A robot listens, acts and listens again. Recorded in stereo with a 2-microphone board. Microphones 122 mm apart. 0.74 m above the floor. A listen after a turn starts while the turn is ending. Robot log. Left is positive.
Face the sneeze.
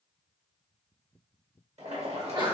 note: The sneeze: about 40° right or 140° right.
cmd yaw -40
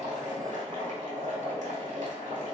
cmd idle
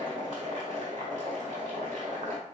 end: I heard a sneeze, but can't make it out now. It was about straight ahead or 100° right.